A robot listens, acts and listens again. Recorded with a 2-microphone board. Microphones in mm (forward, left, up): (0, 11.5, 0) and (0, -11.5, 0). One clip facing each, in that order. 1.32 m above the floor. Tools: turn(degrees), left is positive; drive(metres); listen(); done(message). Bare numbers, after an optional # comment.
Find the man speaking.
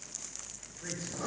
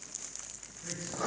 # The man speaking: about 55° left or 125° left.
turn(55)
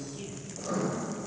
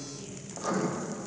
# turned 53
# So it is at 50° left.
turn(50)
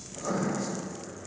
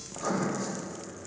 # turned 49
# The man speaking is now 15° right.
turn(-15)
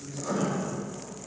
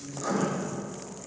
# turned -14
done("Found it: a man speaking, straight ahead, 2 to 4 m away.")